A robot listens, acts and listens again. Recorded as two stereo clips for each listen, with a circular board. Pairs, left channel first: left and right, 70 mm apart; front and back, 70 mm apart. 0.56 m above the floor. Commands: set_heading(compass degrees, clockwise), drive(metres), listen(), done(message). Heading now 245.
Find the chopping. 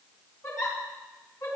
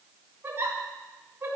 listen()
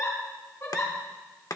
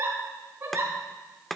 set_heading(160)
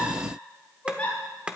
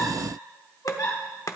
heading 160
set_heading(175)
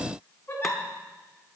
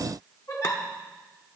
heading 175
listen()
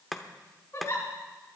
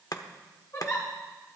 done("Facing the chopping.")